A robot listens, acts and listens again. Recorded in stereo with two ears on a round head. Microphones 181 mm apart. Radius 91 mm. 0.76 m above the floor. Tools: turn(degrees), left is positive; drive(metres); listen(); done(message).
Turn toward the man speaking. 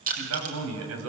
turn(degrees=-90)
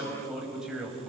done("Found it: a man speaking, straight ahead, over 4 m away.")